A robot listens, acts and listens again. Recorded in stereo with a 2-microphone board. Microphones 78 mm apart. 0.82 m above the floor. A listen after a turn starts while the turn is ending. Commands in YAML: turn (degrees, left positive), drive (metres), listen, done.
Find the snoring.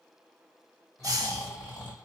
turn: 70
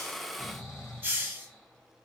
turn: 25
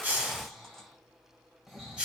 done: "Facing the snoring, 1 to 2 m away."